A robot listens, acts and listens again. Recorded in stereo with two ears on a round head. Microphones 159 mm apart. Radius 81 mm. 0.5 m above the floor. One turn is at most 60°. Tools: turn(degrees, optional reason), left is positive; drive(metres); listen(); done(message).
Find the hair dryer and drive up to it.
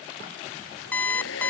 turn(degrees=60)
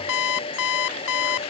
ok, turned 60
turn(degrees=30, reason="So it is at 30° left.")
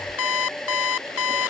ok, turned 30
drive(metres=1.0)
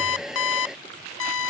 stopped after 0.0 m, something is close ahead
done("Blocked. The hair dryer is further on, straight ahead.")